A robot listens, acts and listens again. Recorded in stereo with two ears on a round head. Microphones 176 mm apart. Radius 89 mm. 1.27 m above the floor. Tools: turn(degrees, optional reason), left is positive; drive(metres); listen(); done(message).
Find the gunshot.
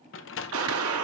turn(degrees=-90)
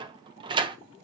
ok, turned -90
done("I heard a gunshot from this way, but can't make it out now.")